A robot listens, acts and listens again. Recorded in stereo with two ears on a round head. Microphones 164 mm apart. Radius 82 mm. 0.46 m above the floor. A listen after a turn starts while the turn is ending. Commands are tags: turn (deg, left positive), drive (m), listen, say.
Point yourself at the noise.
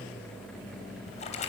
<turn deg="40"/>
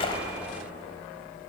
<listen/>
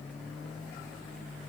<say>I heard a splash, but can't make it out now. It was about straight ahead or 100° left.</say>